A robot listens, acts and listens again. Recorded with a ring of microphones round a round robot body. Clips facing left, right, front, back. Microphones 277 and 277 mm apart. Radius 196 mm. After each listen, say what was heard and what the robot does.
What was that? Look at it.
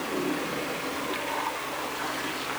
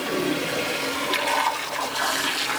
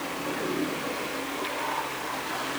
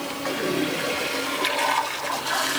Keep listening.
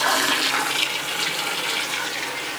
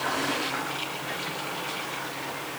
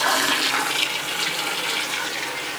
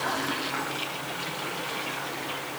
Keep listening.
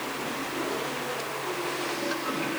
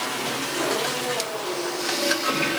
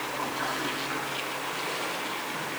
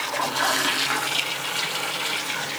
I can't make out anything.